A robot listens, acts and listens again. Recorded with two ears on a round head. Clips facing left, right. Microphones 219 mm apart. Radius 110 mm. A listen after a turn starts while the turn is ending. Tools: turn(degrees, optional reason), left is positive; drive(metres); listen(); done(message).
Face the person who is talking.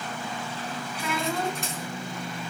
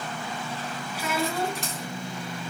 turn(degrees=-30)
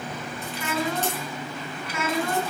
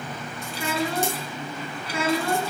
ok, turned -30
turn(degrees=-150, reason="So it is at 150° right.")
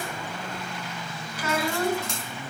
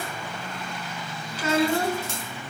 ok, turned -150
turn(degrees=-25, reason="The child speaking is now 25° right.")
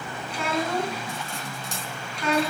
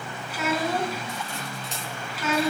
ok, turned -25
done("Found it: a child speaking, straight ahead, 2 to 4 m away.")